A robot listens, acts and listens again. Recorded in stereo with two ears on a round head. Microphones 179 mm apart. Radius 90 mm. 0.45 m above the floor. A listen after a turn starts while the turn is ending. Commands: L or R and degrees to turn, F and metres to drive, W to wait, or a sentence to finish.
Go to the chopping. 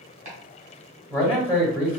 R40
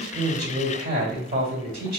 W
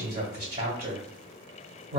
W
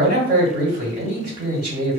I heard chopping, but can't make it out now. It was about straight ahead or 100° right. I did not reach it.